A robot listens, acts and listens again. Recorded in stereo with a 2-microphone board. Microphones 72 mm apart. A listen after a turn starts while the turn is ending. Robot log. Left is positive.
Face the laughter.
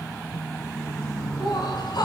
cmd yaw +90
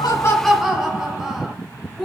end: Facing the laughter, over 4 m away.